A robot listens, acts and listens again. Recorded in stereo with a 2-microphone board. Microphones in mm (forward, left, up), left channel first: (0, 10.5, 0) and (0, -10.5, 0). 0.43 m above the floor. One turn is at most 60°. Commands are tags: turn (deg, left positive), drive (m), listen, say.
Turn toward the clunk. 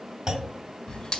<turn deg="-35"/>
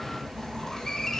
<listen/>
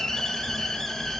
<say>I heard a clunk, but can't make it out now. It was about straight ahead or 110° right.</say>